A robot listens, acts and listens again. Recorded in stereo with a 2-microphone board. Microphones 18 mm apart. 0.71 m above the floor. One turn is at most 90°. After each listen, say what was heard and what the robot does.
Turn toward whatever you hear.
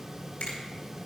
Turn 90° left.
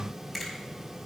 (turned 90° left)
Facing the finger snap, over 4 m away.